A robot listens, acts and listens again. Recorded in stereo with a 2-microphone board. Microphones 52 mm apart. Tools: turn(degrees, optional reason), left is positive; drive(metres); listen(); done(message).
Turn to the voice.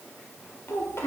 turn(degrees=55, reason="The child speaking: about 55° left or 125° left.")
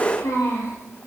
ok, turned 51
turn(degrees=80, reason="So it is at 80° left.")
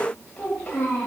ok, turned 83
turn(degrees=25, reason="The child speaking is now 25° left.")
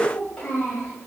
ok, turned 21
turn(degrees=15, reason="The child speaking is now 15° left.")
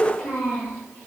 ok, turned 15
done("Facing the child speaking.")